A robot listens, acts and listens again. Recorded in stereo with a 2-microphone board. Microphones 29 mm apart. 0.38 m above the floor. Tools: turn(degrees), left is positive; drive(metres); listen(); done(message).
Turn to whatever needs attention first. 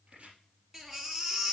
turn(degrees=-20)
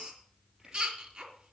turn(degrees=-140)
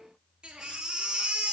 turn(degrees=-30)
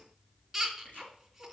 turn(degrees=-10)
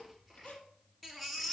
done("Found it: a baby crying, straight ahead.")